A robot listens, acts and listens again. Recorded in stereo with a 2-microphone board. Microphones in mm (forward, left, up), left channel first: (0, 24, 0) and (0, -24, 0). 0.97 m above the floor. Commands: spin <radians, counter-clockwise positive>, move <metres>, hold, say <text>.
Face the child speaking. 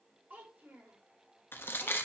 spin -0.79
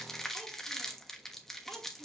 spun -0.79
spin -0.44
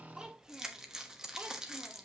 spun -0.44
spin -0.26
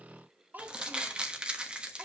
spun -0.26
spin -0.70
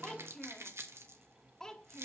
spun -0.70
spin 0.17
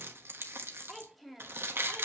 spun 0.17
say Facing the child speaking.